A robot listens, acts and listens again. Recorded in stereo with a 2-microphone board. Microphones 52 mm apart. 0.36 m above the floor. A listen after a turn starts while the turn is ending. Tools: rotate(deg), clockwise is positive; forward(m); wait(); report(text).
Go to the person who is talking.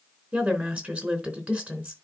rotate(30)
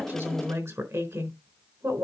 rotate(120)
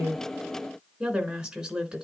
rotate(15)
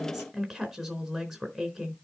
forward(1.0)
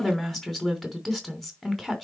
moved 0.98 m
forward(1.0)
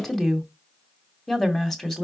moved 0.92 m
forward(1.0)
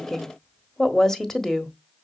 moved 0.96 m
rotate(-10)
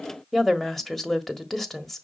forward(1.0)
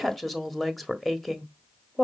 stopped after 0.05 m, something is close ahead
report("Arrived at the woman speaking, straight ahead.")